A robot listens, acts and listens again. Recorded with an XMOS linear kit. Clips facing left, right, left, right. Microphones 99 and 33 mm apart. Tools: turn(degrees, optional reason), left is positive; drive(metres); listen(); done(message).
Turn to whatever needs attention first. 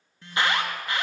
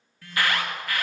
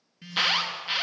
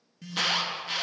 turn(degrees=25, reason="The alarm: about 25° left or 155° left.")
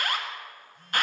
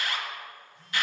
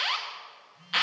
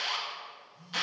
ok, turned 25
turn(degrees=130, reason="So it is at 130° left.")
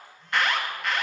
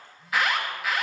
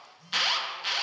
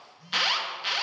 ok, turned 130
done("Facing the alarm, 1 to 2 m away.")